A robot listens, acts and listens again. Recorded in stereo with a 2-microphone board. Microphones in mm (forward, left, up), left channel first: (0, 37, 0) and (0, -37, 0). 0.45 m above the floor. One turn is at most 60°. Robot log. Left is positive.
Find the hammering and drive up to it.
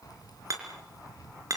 note: The hammering: about 50° right or 130° right.
cmd yaw -50
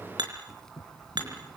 note: So it is at 80° right.
cmd yaw -60
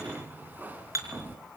note: The hammering is now 45° right.
cmd yaw -45
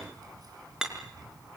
note: The hammering is now 10° right.
cmd yaw -10
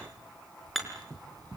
cmd fwd 1.0
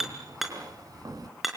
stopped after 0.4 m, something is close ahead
end: Blocked. The hammering is further on, straight ahead.